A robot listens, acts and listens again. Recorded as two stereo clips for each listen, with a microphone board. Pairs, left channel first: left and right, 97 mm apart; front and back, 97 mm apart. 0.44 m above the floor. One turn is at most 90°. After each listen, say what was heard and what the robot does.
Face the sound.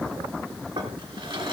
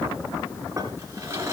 The drawer: 120° right. Turn 90° right.
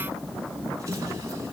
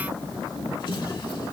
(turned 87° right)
The drawer is now 30° right. Turn 30° right.
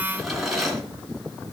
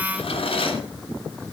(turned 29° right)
Found it: a drawer, straight ahead, 2 to 4 m away.